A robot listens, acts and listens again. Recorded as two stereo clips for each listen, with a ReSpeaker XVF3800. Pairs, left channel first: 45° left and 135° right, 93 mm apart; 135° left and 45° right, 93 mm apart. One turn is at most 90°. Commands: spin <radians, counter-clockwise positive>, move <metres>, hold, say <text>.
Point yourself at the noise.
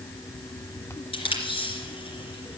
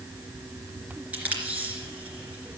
spin 0.52
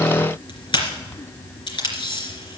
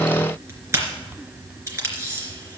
spin 0.26
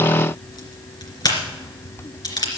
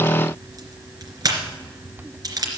say Facing the tape being pulled, 2 to 4 m away.